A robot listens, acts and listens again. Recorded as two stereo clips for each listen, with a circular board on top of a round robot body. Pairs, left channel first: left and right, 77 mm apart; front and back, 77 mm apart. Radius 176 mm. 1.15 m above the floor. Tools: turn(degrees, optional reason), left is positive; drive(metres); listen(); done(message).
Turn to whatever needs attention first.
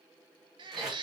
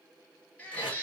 turn(degrees=-75, reason="The baby crying: 75° right.")
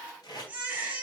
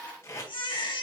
turn(degrees=-20, reason="The baby crying is now 20° right.")
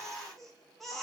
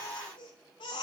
done("Facing the baby crying, under 1 m away.")